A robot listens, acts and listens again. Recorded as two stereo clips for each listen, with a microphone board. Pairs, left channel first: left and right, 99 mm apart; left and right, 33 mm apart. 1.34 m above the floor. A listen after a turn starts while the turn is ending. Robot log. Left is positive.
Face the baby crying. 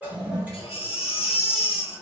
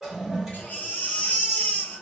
cmd yaw +90
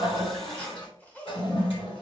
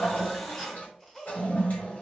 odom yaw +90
cmd idle
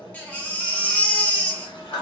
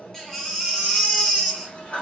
note: The baby crying is now 15° left.
cmd yaw +15
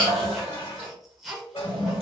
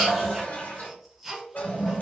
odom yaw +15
end: Found it: a baby crying, straight ahead.